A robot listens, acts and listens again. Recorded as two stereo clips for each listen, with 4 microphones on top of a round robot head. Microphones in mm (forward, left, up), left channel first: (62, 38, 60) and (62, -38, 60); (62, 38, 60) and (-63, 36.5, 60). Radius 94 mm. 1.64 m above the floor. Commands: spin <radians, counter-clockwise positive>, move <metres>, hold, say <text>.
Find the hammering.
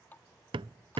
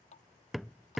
spin -1.57
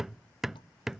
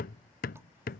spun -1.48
say Found it: hammering, straight ahead.